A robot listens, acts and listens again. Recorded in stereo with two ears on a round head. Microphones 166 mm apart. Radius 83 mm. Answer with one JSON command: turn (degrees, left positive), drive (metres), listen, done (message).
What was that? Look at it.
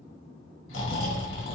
{"turn": 90}
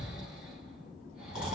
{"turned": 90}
{"done": "Found it: snoring, straight ahead."}